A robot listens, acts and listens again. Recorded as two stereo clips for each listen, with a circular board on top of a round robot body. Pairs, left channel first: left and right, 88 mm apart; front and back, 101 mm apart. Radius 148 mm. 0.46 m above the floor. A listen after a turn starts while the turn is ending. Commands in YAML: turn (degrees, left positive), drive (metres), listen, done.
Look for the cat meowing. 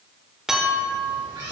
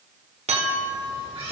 turn: -140
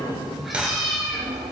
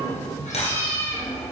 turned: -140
done: "Facing the cat meowing."